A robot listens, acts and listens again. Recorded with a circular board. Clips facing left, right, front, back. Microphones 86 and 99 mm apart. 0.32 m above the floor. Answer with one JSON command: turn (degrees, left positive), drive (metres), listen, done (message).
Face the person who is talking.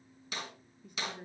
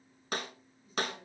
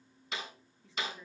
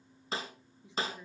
{"turn": 110}
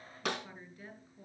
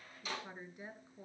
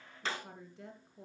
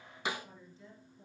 {"turn": -20}
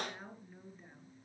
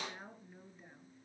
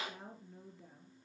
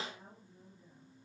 {"done": "Facing the woman speaking."}